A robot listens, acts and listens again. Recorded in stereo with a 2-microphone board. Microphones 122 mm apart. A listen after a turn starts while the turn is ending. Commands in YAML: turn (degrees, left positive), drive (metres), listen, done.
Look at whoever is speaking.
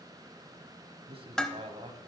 turn: -50
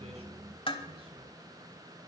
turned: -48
listen: true
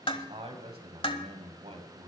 turn: -65
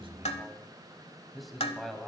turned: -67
done: "Facing the man speaking, 2 to 4 m away."